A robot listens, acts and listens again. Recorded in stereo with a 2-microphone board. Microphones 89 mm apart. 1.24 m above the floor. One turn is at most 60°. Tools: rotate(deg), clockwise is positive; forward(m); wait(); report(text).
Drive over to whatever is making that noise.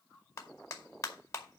rotate(-35)
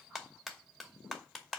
forward(1.0)
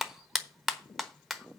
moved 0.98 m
forward(1.0)
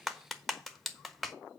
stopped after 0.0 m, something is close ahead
report("Arrived at the clap, straight ahead.")